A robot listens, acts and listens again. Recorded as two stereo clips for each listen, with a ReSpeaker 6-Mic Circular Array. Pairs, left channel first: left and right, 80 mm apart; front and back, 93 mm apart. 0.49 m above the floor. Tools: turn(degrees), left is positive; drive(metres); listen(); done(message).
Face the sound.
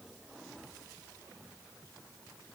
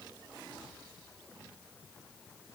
listen()
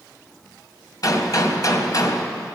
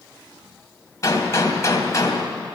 turn(degrees=50)
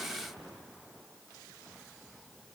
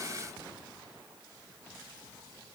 done("Facing where the gunshot came from. I can't hear it now.")